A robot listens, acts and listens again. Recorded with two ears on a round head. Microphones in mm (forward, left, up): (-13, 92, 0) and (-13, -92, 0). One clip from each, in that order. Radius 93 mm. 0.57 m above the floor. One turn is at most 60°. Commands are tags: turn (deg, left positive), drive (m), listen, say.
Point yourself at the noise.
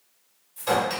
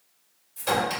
<turn deg="-30"/>
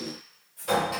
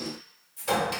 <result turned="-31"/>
<turn deg="-60"/>
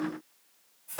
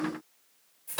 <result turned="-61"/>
<turn deg="-60"/>
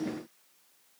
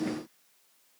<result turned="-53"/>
<turn deg="-25"/>
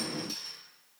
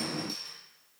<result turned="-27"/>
<say>Found it: a clink, straight ahead.</say>